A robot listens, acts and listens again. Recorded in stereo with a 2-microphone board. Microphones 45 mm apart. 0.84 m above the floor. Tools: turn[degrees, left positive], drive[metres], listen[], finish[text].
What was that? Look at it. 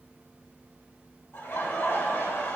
Thought: The laughter: about 65° left or 115° left.
Action: turn[65]
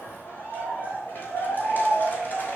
Thought: So it is at 45° left.
Action: turn[45]
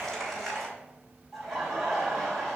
Action: finish[Found it: laughter, straight ahead, over 4 m away.]